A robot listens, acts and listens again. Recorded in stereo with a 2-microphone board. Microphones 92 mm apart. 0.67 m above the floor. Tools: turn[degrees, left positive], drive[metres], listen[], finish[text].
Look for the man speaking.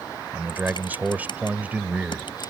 Thought: The man speaking: about 15° right or 165° right.
Action: turn[-15]
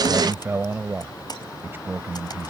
Thought: The man speaking: about 25° right or 155° right.
Action: turn[-25]
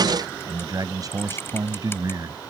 Thought: So it is at 135° right.
Action: turn[-135]
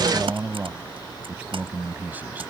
Thought: The man speaking is now 20° right.
Action: turn[-20]
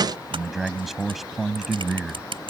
Action: finish[Facing the man speaking.]